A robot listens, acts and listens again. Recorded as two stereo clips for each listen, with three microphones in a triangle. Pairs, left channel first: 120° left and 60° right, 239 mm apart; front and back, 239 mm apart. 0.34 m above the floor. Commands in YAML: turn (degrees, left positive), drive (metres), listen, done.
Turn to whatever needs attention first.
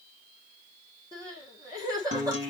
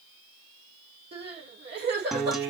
turn: -135
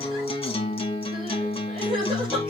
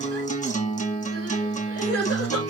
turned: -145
turn: 10
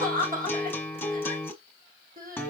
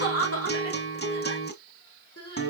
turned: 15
done: "Facing the crying, over 4 m away."